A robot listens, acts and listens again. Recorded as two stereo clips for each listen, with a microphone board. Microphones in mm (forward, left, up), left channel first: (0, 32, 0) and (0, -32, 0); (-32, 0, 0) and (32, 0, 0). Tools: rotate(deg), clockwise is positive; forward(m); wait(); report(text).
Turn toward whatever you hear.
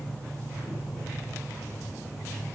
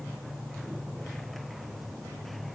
wait()
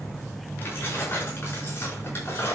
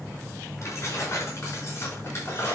rotate(-135)
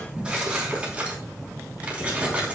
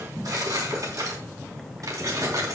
rotate(20)
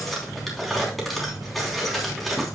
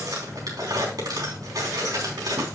report("Found it: keys jangling, straight ahead.")